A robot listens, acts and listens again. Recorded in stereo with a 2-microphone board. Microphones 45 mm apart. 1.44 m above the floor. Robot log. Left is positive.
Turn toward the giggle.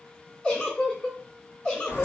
note: The giggle: about 20° left or 160° left.
cmd yaw +20
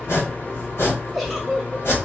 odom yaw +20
end: Found it: a giggle, straight ahead, under 1 m away.